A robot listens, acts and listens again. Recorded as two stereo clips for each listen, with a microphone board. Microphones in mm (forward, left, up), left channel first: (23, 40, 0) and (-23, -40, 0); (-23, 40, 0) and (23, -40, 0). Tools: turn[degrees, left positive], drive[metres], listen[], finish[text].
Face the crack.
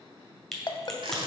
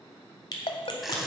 Thought: The crack: 145° left.
Action: turn[145]
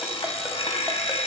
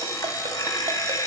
Action: finish[I heard a crack from this way, but can't make it out now.]